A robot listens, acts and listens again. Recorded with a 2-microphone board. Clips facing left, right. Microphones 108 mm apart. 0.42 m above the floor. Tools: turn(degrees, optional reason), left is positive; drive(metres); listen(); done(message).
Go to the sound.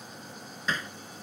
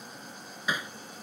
turn(degrees=-30)
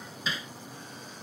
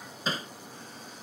turn(degrees=-135, reason="So it is at 135° right.")
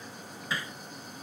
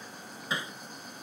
turn(degrees=-20, reason="The hammering is now 20° right.")
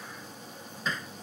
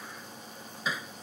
drive(metres=1.0)
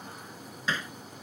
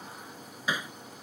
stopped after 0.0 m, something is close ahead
turn(degrees=-15, reason="The hammering is now 15° right.")
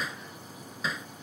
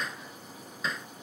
done("Something is in my way. I am facing the hammering but have not reached it.")